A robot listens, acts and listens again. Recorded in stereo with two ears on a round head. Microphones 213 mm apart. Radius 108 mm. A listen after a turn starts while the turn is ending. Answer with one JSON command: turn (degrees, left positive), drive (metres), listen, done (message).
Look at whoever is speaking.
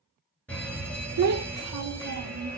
{"turn": -70}
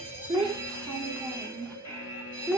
{"done": "Found it: a child speaking, straight ahead, under 1 m away."}